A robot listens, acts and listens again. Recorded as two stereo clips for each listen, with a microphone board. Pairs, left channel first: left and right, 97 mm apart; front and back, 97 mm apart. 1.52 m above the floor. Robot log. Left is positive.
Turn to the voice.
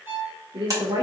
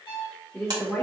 note: The woman speaking: 70° right.
cmd yaw -70
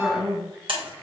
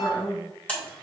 note: The woman speaking is now 10° right.
cmd yaw -10
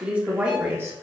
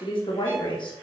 note: The woman speaking is now 30° right.
cmd yaw -30
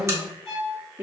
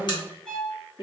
note: The woman speaking is now 25° right.
cmd yaw -25
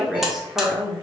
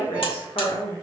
note: The woman speaking is now 10° right.
cmd yaw -10
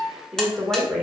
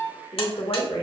note: The woman speaking is now 10° right.
cmd yaw -10
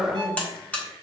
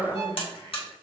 end: Facing the woman speaking.